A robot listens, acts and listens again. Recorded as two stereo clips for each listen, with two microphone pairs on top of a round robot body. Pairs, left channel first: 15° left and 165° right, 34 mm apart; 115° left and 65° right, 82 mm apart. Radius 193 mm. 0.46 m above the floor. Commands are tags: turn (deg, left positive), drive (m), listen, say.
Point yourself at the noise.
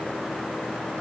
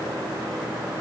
<listen/>
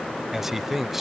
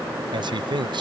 <turn deg="-80"/>
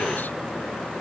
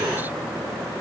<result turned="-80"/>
<listen/>
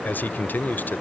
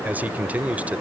<say>Facing the man speaking.</say>